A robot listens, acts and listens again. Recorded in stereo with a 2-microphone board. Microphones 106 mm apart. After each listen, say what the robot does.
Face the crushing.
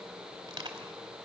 Turn 40° right.
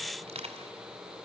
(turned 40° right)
Turn 95° right.
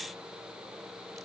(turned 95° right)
Keep listening.
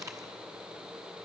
Turn 30° right.
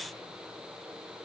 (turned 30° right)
Keep listening.
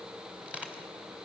Turn 10° right.
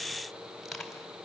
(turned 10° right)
Found it: crushing, straight ahead, 2 to 4 m away.